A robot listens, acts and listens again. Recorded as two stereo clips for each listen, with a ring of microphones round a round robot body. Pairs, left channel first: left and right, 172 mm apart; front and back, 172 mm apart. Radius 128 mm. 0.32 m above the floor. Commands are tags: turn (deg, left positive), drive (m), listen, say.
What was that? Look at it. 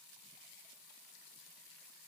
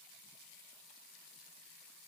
<listen/>
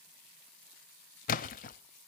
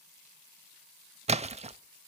<turn deg="130"/>
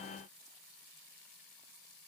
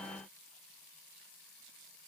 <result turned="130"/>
<say>I heard a splash from this way, but can't make it out now.</say>